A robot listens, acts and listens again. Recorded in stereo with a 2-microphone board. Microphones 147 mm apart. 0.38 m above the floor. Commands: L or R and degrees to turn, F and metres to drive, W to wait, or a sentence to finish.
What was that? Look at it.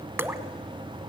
R30
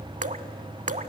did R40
R125
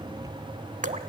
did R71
R55
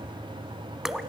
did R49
Found it: dripping, straight ahead, under 1 m away.